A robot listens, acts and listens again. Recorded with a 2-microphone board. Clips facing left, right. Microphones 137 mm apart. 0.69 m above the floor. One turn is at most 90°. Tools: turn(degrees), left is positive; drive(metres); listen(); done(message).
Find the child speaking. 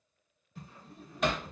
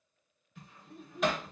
turn(degrees=-60)
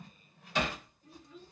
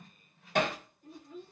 turn(degrees=-55)
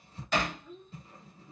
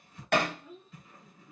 done("Found it: a child speaking, straight ahead, 1 to 2 m away.")